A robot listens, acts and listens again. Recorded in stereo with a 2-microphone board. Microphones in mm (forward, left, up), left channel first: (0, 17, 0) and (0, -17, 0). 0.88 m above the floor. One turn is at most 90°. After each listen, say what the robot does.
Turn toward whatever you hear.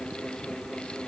Keep listening.
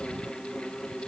Keep listening.
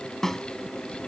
Turn 30° left.
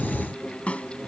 Turn 90° left.
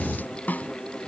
Turn 60° left.
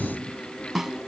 Turn 10° right.
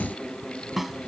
Found it: a snare drum, straight ahead.